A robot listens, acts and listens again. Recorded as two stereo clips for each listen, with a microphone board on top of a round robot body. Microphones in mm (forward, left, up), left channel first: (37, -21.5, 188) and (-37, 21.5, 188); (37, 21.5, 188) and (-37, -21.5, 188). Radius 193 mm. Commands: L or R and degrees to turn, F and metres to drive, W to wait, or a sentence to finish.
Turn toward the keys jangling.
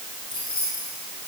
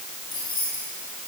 Facing the keys jangling.